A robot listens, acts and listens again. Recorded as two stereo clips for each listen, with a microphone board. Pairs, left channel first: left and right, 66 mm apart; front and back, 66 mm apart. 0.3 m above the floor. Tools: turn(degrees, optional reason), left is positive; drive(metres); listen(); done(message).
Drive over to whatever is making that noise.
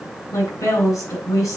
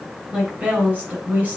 turn(degrees=115, reason="The woman speaking: 115° left.")
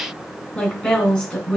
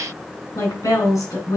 turn(degrees=15, reason="The woman speaking is now 15° left.")
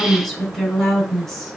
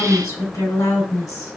drive(metres=1.0)
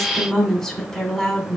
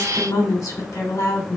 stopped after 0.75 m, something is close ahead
turn(degrees=10, reason="The woman speaking is now 10° left.")
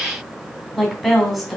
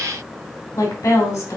done("Something is in my way. I am facing the woman speaking but have not reached it.")